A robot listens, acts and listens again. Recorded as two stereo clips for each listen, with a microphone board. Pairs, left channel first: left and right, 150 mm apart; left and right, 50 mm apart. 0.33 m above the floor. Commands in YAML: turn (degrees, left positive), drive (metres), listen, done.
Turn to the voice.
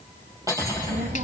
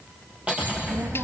turn: -65
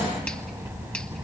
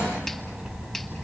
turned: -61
turn: -20
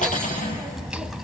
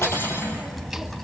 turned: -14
done: "Found it: a child speaking, straight ahead."